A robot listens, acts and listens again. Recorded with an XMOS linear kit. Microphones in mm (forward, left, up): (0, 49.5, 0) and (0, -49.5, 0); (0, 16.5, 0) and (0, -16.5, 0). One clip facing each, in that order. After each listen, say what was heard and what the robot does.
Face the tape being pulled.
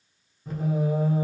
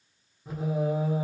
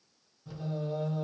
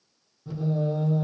Keep listening.
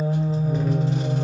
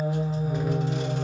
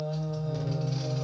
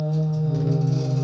Keep listening.
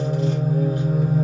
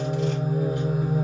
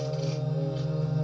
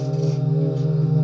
I can't make out tape being pulled, only singing.